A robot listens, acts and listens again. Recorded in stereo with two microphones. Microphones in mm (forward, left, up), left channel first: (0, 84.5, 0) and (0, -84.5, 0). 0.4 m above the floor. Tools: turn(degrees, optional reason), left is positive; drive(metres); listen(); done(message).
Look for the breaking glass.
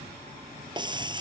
turn(degrees=-25, reason="The breaking glass: about 25° right or 155° right.")
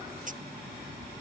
listen()
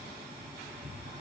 done("I heard breaking glass, but can't make it out now. It was about straight ahead or 130° right.")